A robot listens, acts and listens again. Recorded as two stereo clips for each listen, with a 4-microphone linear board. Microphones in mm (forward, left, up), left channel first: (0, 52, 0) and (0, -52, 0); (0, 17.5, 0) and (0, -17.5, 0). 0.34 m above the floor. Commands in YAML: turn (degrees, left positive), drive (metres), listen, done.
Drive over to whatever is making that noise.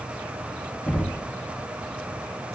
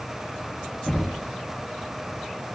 turn: 30
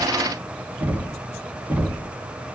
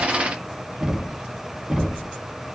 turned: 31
turn: -20
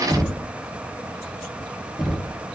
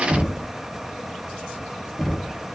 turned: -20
drive: 1.0
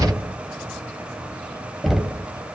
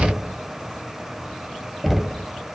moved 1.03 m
drive: 1.0
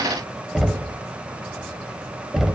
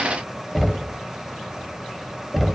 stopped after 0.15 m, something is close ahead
done: "Arrived at the knocking, straight ahead."